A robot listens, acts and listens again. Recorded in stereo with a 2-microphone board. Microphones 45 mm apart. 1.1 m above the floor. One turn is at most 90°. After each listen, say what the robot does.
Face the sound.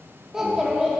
Turn 30° right.
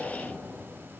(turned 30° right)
Keep listening.
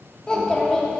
Turn 15° left.
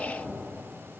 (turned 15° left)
Found it: a child speaking, straight ahead.